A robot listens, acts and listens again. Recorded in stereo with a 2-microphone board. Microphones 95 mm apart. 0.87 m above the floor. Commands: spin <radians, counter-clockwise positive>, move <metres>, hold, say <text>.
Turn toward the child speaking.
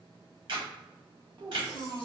spin -0.70
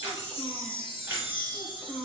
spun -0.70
spin -0.17
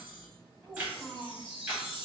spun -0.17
say Facing the child speaking.